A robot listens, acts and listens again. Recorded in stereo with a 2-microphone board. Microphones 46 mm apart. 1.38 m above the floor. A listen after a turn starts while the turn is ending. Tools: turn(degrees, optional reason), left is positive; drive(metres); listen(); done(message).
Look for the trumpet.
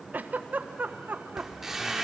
listen()
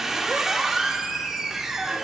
listen()
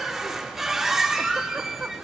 done("I can't make out a trumpet to turn to.")